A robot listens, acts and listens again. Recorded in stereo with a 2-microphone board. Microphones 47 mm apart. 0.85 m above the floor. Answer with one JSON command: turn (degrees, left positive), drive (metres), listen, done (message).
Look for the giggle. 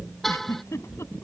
{"turn": 90}
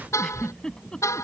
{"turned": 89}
{"turn": 15}
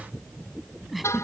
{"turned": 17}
{"done": "Facing the giggle."}